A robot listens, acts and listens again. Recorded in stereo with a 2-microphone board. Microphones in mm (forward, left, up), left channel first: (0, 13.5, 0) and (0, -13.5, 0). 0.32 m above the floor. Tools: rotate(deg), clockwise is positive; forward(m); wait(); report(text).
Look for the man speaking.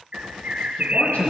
rotate(-70)
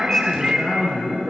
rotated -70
rotate(-20)
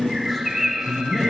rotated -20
report("Facing the man speaking, over 4 m away.")